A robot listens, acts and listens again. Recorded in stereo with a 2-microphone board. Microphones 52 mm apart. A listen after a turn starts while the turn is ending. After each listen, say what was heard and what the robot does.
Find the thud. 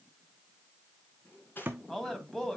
The thud: about 35° right or 145° right. Turn 35° right.
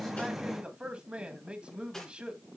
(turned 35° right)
Keep listening.
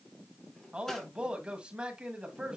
I heard a thud, but can't make it out now. It was about straight ahead or 110° right.